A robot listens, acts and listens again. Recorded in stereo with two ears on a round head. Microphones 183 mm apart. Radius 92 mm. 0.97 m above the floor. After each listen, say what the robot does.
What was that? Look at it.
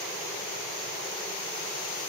Keep listening.
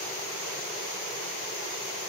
Keep listening.
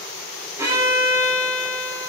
Turn 30° right.
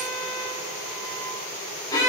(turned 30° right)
Turn 20° left.
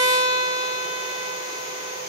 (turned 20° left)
Found it: a violin, straight ahead.